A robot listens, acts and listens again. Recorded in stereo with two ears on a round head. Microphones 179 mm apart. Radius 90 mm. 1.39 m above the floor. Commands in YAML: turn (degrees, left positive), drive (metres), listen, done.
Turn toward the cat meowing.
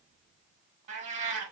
turn: -40
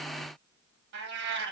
turn: -90
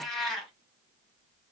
done: "Facing the cat meowing."